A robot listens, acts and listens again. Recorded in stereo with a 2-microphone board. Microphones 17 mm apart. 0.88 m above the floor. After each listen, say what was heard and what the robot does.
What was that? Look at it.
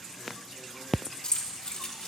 The keys jangling: about 70° left or 110° left. Turn 70° left.
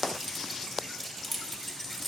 Found it: keys jangling, straight ahead, 1 to 2 m away.